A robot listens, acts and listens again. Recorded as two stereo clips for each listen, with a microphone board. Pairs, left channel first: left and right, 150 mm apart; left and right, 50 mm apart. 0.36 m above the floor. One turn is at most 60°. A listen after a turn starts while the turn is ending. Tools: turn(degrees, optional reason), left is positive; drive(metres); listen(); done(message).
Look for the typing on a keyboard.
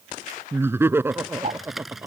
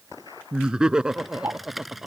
turn(degrees=30)
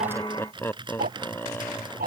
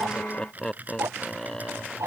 turn(degrees=-30, reason="So it is at 30° right.")
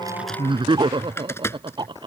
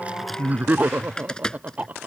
turn(degrees=15, reason="The typing on a keyboard is now 15° left.")
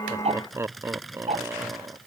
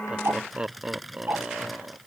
done("Facing the typing on a keyboard.")